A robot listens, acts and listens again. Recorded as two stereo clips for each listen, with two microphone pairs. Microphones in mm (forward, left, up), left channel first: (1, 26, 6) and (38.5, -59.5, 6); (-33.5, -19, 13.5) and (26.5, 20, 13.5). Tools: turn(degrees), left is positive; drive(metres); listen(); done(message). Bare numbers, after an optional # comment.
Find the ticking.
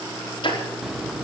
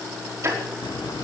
# The ticking: 85° left.
turn(85)
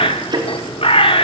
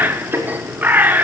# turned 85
# The ticking is now 25° right.
turn(-25)
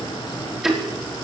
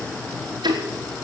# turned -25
# The ticking is now 20° left.
turn(20)
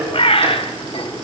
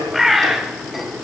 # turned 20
done("Found it: ticking, straight ahead.")